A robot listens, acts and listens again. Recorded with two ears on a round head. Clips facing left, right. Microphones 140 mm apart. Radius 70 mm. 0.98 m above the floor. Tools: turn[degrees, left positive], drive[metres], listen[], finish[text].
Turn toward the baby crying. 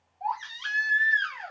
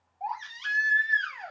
Thought: The baby crying: about 20° right or 160° right.
Action: turn[-20]
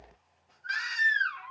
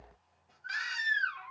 Action: finish[Found it: a baby crying, straight ahead, 1 to 2 m away.]